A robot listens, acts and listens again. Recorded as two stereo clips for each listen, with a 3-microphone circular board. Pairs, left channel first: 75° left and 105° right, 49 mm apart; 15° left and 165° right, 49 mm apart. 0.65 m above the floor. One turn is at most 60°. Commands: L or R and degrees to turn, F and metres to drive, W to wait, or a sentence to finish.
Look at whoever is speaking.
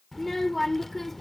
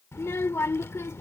R10
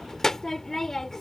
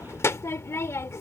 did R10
Facing the child speaking.